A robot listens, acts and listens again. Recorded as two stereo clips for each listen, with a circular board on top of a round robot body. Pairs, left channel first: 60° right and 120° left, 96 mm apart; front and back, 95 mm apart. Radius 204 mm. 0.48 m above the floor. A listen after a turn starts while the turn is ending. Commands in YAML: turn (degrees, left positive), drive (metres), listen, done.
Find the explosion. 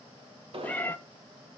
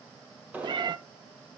turn: 105
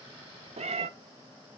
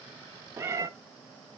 done: "Facing where the explosion came from. I can't hear it now."